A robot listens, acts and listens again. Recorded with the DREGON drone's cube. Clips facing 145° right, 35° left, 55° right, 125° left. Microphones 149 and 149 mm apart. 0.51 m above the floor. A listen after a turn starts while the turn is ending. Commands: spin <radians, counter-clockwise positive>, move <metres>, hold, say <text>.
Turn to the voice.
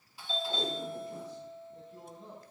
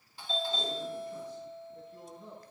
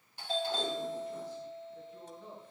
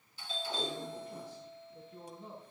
spin 2.79
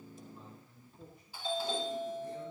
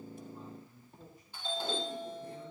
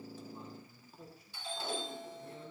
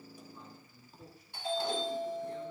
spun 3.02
spin -0.17
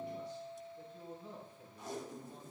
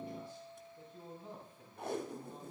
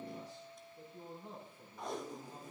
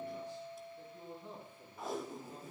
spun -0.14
say Facing the man speaking, over 4 m away.